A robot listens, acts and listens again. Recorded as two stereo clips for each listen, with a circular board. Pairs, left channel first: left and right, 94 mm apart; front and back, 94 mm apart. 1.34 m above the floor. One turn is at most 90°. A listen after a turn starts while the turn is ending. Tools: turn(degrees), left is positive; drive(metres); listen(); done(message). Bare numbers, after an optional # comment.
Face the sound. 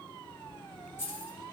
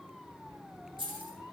# The keys jangling: 155° left.
turn(90)
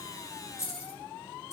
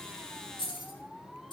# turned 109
# The keys jangling is now 30° left.
turn(30)
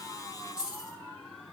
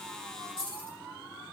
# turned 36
# The keys jangling is now 10° right.
turn(-10)
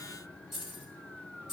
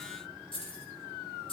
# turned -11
done("Found it: keys jangling, straight ahead, over 4 m away.")